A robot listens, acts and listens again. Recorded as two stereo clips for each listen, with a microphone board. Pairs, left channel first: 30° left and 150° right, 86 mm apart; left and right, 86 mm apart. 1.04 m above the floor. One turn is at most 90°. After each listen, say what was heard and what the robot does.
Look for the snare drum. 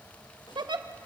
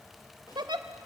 Keep listening.
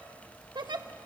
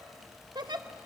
Keep listening.
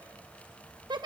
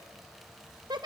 I can't make out a snare drum to turn to.